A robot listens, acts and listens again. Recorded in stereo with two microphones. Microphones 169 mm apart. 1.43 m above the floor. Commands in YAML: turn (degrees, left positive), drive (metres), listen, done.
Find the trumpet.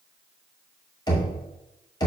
listen: true
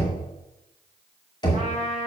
turn: -30
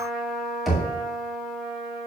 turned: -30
done: "Found it: a trumpet, straight ahead."